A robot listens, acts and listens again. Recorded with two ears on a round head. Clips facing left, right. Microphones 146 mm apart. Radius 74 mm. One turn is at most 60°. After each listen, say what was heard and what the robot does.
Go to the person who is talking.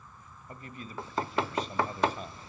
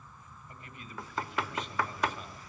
The man speaking: about 30° left or 150° left. Turn 30° left.
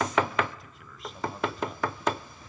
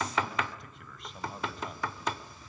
Keep listening.
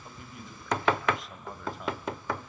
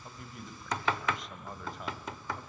Drive 1.0 m forward.
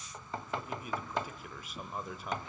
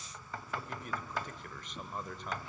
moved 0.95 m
Drive 1.0 m forward.
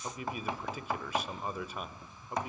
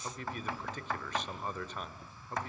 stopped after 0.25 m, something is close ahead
The man speaking is now 10° left. Turn 10° left.
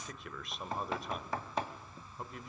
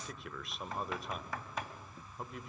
Arrived at the man speaking, straight ahead.